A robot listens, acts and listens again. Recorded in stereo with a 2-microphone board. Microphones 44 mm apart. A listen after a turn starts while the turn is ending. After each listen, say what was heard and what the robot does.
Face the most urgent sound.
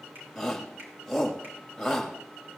Turn 30° left.
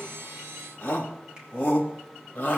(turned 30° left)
So it is at 150° left. Turn 150° left.
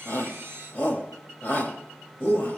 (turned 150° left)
The shout is now 60° left. Turn 60° left.
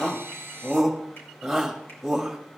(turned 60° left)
Facing the shout, 2 to 4 m away.